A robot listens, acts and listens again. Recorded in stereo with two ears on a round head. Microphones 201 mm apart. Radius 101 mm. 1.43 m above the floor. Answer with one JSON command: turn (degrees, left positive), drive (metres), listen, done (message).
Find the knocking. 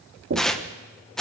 {"turn": -60}
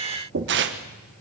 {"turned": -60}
{"turn": -60}
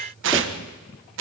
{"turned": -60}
{"listen": true}
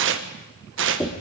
{"done": "Facing the knocking, 2 to 4 m away."}